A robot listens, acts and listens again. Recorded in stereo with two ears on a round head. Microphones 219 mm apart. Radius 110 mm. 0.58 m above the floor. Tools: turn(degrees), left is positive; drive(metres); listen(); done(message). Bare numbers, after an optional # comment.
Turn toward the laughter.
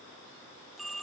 listen()
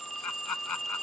turn(90)
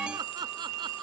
# So it is at 15° right.
turn(-15)
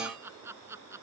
# The laughter is now 10° right.
turn(-10)
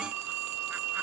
listen()
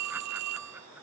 listen()
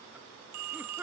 # The laughter is now 10° right.
turn(-10)
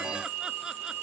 listen()
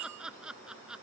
done("Facing the laughter.")